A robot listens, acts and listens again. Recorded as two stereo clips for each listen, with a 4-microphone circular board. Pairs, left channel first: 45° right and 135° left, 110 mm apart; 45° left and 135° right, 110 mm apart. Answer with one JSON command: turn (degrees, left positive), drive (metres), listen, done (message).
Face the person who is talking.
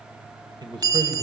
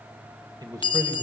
{"turn": 175}
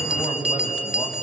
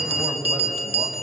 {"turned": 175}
{"turn": -90}
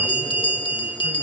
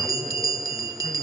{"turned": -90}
{"listen": true}
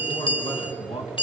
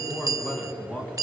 {"turn": -30}
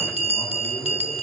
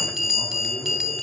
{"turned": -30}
{"listen": true}
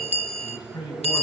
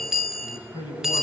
{"done": "Found it: a man speaking, straight ahead, over 4 m away."}